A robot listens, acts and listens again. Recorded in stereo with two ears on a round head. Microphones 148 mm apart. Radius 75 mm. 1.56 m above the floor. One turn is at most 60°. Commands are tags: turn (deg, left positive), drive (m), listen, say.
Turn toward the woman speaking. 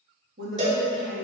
<turn deg="-60"/>
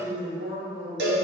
<turn deg="-15"/>
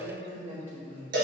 <turn deg="-15"/>
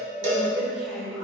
<say>Facing the woman speaking, 2 to 4 m away.</say>